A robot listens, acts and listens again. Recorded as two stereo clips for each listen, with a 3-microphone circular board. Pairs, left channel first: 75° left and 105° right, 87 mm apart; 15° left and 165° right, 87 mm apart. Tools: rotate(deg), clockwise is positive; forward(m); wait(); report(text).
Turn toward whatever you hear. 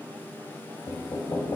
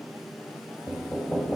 rotate(-95)
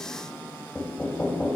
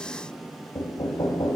report("Found it: knocking, straight ahead.")